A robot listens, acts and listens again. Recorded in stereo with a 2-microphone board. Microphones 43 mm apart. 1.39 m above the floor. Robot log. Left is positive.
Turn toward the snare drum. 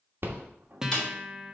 note: The snare drum: about 20° left or 160° left.
cmd yaw +20
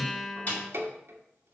note: So it is at 140° left.
cmd yaw +140
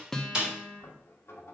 note: The snare drum is now 25° right.
cmd yaw -25
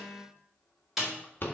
end: Found it: a snare drum, straight ahead.